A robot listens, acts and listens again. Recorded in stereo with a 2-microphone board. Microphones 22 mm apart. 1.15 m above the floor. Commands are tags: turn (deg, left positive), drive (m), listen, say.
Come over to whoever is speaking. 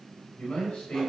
<turn deg="65"/>
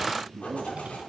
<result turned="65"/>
<drive m="1.0"/>
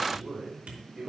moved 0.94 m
<drive m="1.0"/>
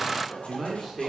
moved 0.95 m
<drive m="1.0"/>
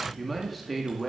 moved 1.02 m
<drive m="1.0"/>
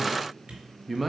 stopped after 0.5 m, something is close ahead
<say>I am next to the man speaking.</say>